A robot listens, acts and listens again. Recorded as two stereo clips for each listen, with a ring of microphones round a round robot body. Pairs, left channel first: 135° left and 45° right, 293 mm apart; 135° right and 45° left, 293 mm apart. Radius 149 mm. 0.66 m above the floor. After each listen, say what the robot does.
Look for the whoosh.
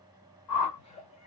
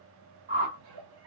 Turn 110° left.
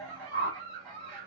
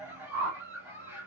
Turn 10° left.
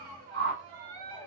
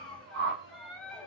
Found it: a whoosh, straight ahead, 1 to 2 m away.